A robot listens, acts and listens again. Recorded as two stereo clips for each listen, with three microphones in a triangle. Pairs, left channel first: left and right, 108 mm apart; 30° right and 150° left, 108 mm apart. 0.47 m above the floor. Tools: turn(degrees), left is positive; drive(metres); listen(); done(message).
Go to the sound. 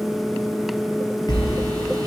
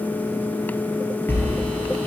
turn(degrees=40)
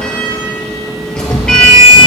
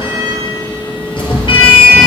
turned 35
drive(metres=1.0)
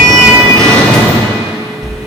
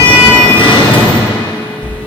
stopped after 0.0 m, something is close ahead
done("Blocked. The sliding door is further on, straight ahead.")